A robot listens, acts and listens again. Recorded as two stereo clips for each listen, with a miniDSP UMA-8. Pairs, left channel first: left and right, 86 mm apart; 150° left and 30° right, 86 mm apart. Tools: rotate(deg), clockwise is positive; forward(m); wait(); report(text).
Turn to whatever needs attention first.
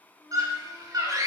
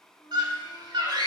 rotate(50)
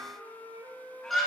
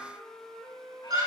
report("Found it: a scream, straight ahead.")